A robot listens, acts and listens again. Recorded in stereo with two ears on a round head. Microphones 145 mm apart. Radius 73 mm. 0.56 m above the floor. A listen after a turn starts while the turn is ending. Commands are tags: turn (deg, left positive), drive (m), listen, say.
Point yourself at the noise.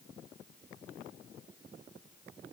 <listen/>
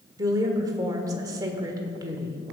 <turn deg="-20"/>
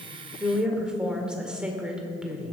<say>Found it: a woman speaking, straight ahead, 1 to 2 m away.</say>